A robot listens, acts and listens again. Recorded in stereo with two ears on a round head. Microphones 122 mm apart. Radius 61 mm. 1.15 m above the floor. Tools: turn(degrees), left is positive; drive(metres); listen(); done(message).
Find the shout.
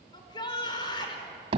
turn(degrees=35)
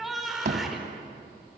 done("Found it: a shout, straight ahead.")